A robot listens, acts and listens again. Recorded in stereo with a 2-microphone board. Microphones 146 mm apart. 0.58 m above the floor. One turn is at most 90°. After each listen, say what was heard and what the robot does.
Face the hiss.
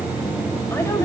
Keep listening.
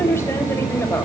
Keep listening.
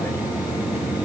I can't make out a hiss to turn to.